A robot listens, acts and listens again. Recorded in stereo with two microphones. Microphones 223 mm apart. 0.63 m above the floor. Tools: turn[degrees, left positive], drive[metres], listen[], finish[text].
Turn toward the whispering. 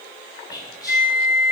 Thought: The whispering: about 15° left or 165° left.
Action: turn[15]
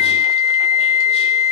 Action: listen[]
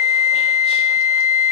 Action: listen[]
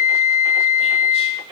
Action: finish[I heard whispering, but can't make it out now. It was about straight ahead or 150° left.]